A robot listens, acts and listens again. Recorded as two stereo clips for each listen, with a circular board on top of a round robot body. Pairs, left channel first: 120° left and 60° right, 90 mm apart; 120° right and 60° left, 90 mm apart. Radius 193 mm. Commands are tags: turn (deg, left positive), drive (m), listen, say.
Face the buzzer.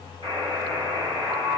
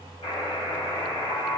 <turn deg="-100"/>
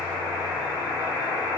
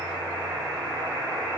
<say>Found it: a buzzer, straight ahead.</say>